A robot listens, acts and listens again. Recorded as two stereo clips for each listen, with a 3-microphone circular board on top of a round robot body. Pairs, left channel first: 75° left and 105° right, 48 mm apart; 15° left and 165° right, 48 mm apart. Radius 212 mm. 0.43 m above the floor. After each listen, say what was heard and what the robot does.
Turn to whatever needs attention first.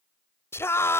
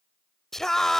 The scream: 95° left. Turn 95° left.
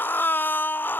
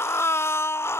The scream is now 30° left. Turn 30° left.
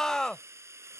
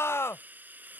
Facing the scream.